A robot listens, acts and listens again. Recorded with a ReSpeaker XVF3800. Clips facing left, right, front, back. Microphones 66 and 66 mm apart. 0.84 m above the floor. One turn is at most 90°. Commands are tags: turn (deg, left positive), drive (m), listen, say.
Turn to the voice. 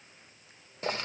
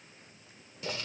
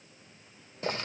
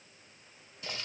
<listen/>
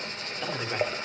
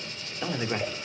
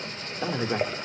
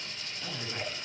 <turn deg="-10"/>
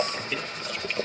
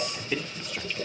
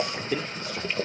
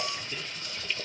<say>Facing the man speaking, 1 to 2 m away.</say>